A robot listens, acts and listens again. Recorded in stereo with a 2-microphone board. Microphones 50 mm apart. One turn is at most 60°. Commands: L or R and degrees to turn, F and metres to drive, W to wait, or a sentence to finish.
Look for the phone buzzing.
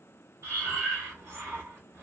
W
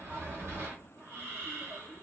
W
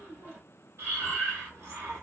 I can't make out a phone buzzing to turn to.